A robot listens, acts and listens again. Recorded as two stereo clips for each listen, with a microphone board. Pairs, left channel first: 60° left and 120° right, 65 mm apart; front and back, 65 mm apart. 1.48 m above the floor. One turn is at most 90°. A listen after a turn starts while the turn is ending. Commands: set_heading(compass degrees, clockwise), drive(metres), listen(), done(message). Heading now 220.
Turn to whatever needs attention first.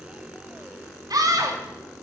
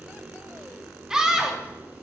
set_heading(310)
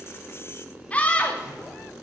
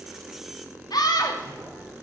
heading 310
set_heading(320)
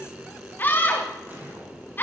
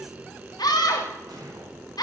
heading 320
done("Found it: a scream, straight ahead.")